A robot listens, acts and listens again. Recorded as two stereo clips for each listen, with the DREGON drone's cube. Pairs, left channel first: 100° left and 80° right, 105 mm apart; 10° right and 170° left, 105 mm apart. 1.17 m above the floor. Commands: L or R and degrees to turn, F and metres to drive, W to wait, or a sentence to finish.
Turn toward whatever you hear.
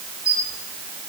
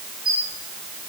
R155
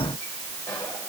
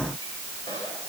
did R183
L25
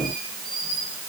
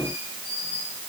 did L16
L10
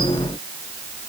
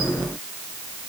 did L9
W
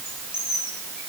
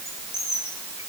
Found it: a squeak, straight ahead.